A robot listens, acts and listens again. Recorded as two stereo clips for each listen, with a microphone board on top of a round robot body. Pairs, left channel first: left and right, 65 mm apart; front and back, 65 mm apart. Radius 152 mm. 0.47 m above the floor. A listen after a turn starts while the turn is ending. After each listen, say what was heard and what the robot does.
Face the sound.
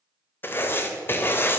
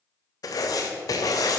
The writing: 30° left. Turn 30° left.
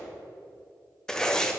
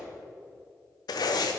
The writing is now 10° left. Turn 10° left.
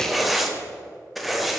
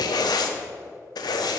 Found it: writing, straight ahead, under 1 m away.